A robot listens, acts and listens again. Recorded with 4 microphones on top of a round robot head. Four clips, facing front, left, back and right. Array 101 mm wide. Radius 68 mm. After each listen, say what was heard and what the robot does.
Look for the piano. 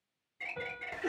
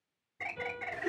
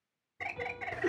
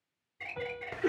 The piano: 60° right. Turn 60° right.
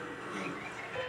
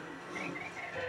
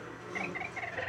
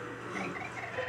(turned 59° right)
Keep listening.
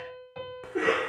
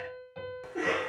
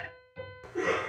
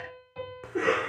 Facing the piano.